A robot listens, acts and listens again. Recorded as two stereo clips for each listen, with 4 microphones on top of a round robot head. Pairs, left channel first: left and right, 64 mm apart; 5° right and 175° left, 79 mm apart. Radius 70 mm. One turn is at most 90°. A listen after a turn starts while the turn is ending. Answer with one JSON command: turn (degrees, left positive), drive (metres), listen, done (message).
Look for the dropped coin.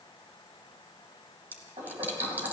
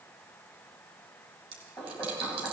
{"turn": -90}
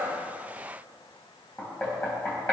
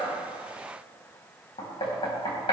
{"turn": -60}
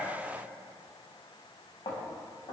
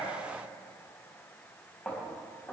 {"done": "I heard a dropped coin from this way, but can't make it out now."}